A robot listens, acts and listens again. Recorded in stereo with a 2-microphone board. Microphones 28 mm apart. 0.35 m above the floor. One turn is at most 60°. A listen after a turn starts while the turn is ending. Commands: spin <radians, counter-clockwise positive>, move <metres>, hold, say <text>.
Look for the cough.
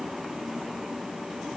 hold
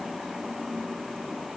hold
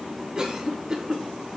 spin -0.52
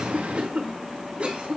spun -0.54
spin -1.05
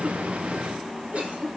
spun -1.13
spin -0.87
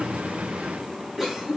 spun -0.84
say Found it: a cough, straight ahead.